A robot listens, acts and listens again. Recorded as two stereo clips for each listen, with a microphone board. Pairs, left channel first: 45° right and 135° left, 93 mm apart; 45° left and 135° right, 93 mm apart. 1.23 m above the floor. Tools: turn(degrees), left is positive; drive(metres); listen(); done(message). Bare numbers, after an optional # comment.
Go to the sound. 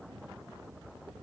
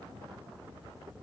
listen()
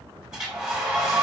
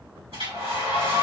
# The hair dryer: 140° right.
turn(-140)
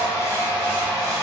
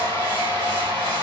# The hair dryer is now 10° left.
turn(10)
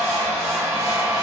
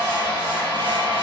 drive(1.0)
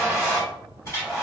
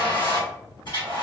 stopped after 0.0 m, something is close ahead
# The hair dryer is now 10° left.
turn(10)
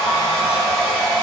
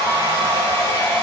done("Something is in my way. I am facing the hair dryer but have not reached it.")